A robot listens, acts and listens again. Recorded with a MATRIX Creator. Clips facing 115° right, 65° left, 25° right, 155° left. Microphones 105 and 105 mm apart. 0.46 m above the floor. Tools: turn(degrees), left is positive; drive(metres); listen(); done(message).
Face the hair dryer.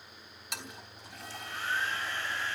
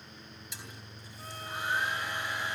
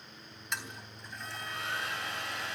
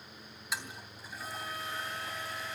done("Found it: a hair dryer, straight ahead, over 4 m away.")